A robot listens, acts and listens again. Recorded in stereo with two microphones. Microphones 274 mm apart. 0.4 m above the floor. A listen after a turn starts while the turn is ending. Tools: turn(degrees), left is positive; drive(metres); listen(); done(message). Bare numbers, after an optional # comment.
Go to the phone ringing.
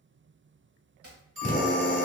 # The phone ringing: about 45° right or 135° right.
turn(-45)
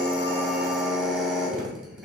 listen()
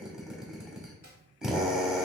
listen()
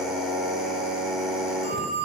drive(1.0)
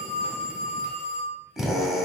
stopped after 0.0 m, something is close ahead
done("Something is in my way. I am facing the phone ringing but have not reached it.")